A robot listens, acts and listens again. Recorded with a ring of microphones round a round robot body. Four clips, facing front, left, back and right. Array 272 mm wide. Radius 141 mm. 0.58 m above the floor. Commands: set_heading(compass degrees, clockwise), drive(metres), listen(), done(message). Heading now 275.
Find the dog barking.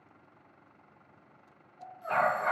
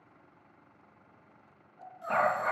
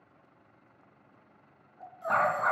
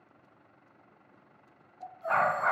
set_heading(60)
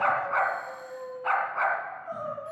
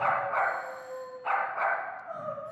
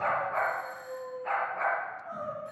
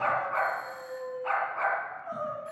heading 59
done("Facing the dog barking.")